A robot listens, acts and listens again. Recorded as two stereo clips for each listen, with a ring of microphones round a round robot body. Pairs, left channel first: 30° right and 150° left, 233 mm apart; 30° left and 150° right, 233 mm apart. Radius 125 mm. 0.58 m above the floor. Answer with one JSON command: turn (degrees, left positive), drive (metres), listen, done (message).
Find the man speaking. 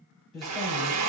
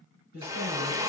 {"turn": -120}
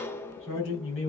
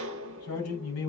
{"turn": 10}
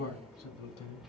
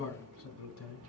{"done": "Facing the man speaking, over 4 m away."}